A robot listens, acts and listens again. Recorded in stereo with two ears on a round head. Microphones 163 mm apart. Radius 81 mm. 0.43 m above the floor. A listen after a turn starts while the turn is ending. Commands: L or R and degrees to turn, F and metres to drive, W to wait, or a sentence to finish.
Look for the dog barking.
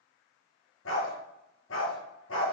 L90
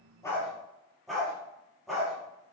Facing the dog barking, over 4 m away.